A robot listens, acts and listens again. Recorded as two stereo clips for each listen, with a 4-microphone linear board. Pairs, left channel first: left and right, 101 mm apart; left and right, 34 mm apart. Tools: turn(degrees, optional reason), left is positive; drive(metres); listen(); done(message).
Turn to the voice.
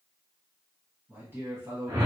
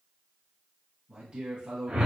turn(degrees=-25, reason="The man speaking: about 25° right or 155° right.")
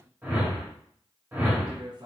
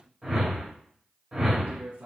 turn(degrees=-125, reason="So it is at 125° right.")
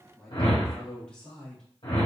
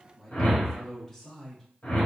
turn(degrees=10, reason="The man speaking is now 10° left.")
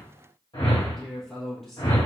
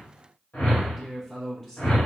done("Found it: a man speaking, straight ahead.")